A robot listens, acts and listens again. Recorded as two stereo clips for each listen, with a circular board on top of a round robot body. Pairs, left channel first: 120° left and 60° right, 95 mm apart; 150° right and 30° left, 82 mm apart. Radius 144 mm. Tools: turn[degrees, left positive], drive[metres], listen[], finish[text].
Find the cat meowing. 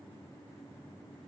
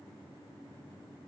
Action: listen[]
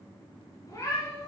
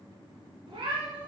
Thought: The cat meowing: 55° left.
Action: turn[55]
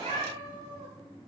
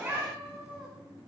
Thought: The cat meowing is now 55° right.
Action: turn[-55]
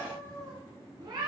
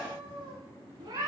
Thought: The cat meowing is now 10° right.
Action: turn[-10]
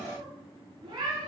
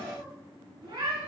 Thought: The cat meowing is now 15° right.
Action: turn[-15]
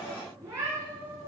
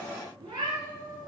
Action: finish[Facing the cat meowing.]